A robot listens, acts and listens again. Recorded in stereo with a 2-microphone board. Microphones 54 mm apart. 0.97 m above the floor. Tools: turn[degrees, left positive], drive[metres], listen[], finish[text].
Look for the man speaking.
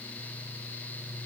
Action: listen[]
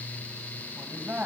Thought: The man speaking: about 35° right or 145° right.
Action: turn[-35]
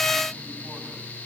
Action: listen[]
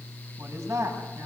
Thought: So it is at 105° right.
Action: turn[-105]
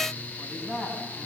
Thought: The man speaking is now 15° right.
Action: turn[-15]
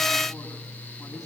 Action: listen[]
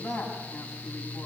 Action: finish[Found it: a man speaking, straight ahead.]